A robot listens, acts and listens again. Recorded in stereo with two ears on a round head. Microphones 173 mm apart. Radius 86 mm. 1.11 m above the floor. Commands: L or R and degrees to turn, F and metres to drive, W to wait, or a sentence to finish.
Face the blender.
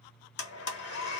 L60
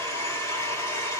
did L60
L15
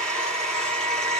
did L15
Facing the blender.